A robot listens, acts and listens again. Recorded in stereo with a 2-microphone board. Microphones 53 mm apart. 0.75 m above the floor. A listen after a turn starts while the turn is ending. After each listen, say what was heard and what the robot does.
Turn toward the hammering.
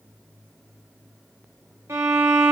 Keep listening.
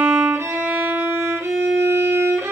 Keep listening.
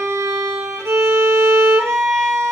I can't make out hammering, only a violin.